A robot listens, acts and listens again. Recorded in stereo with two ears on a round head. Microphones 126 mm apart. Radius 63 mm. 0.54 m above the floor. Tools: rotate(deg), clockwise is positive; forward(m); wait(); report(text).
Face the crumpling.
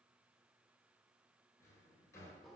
wait()
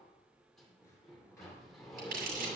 rotate(70)
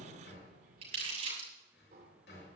rotate(45)
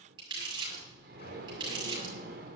rotate(30)
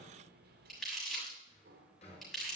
report("Facing the crumpling, over 4 m away.")